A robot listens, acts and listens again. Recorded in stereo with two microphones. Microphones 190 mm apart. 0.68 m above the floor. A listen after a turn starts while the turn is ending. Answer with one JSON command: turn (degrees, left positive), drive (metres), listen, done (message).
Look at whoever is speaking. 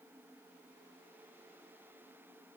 {"listen": true}
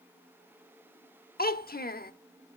{"turn": 55}
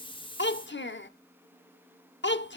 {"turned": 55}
{"turn": 75}
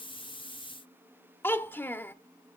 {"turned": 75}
{"turn": 10}
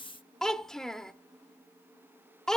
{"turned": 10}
{"done": "Found it: a child speaking, straight ahead, under 1 m away."}